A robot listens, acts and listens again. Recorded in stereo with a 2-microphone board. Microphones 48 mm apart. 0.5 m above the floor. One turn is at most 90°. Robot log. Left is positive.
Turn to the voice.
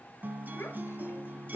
note: The child speaking: about 65° left or 115° left.
cmd yaw +65
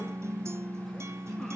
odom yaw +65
cmd idle
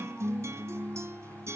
cmd idle
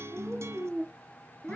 note: So it is at 20° left.
cmd yaw +20
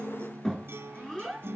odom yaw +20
end: Found it: a child speaking, straight ahead, 2 to 4 m away.